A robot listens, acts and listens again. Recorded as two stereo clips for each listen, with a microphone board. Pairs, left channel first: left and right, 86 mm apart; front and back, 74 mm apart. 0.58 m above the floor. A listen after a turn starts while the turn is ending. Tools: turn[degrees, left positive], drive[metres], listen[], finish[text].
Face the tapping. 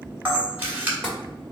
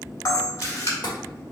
Thought: The tapping: 10° left.
Action: turn[10]
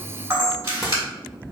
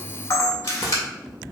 Action: listen[]
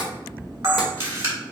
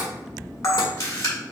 Action: finish[Found it: tapping, straight ahead, 1 to 2 m away.]